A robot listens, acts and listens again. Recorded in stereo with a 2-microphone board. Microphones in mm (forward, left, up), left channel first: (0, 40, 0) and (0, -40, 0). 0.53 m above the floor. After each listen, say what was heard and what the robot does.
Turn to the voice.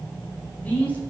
The man speaking: about 20° left or 160° left. Turn 20° left.
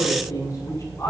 So it is at 140° left. Turn 140° left.
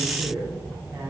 The man speaking is now 30° right. Turn 30° right.
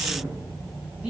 Keep listening.
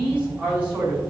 The man speaking is now 20° right. Turn 20° right.
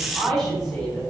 Facing the man speaking.